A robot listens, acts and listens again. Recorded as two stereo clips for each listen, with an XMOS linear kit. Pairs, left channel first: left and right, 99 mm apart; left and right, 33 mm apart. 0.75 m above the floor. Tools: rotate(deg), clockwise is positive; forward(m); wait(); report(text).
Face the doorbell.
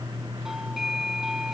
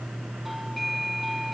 rotate(30)
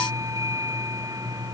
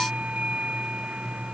rotate(145)
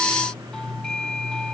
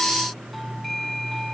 report("Found it: a doorbell, straight ahead.")